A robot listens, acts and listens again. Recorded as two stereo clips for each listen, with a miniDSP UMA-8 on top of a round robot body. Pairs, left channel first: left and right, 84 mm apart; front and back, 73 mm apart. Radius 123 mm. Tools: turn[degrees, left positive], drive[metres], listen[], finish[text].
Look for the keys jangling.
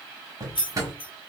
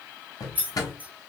Thought: The keys jangling: 110° left.
Action: turn[110]
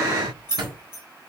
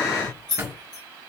Thought: The keys jangling is now 30° left.
Action: turn[30]
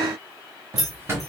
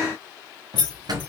Action: finish[Found it: keys jangling, straight ahead.]